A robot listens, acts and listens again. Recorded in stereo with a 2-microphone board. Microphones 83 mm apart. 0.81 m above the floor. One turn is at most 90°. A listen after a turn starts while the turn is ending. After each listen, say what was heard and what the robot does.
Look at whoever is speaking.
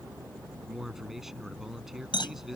Turn 30° right.
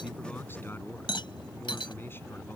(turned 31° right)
So it is at 30° left. Turn 30° left.
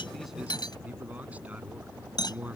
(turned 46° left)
The man speaking is now 15° right. Turn 15° right.
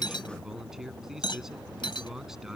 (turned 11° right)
Facing the man speaking.